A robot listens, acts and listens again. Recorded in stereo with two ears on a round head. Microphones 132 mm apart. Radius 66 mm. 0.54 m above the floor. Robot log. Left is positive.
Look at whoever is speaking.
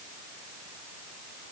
cmd idle
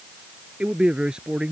cmd yaw -30
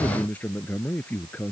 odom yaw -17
note: So it is at 10° left.
cmd yaw +10
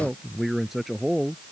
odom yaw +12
end: Facing the man speaking.